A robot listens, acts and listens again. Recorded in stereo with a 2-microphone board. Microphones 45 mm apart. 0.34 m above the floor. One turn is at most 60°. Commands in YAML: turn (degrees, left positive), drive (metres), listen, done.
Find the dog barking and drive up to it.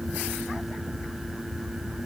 listen: true
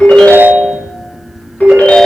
listen: true
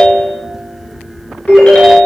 done: "I can't make out a dog barking, only a ringtone."